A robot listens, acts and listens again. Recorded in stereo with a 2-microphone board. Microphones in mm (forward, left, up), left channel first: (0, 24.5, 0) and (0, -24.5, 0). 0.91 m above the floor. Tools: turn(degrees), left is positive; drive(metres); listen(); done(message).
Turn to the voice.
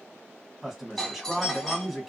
turn(degrees=-30)
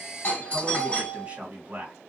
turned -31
turn(degrees=-145)
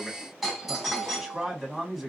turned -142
done("Found it: a man speaking, straight ahead, 1 to 2 m away.")